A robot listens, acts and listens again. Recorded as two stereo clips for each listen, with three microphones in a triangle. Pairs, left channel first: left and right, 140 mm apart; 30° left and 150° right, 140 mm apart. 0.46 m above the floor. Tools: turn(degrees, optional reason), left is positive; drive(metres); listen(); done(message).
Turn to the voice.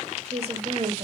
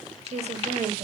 turn(degrees=-125, reason="The woman speaking: 125° right.")
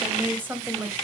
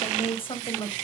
turn(degrees=-20, reason="The woman speaking is now 20° right.")
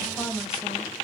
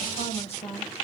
done("Facing the woman speaking, 2 to 4 m away.")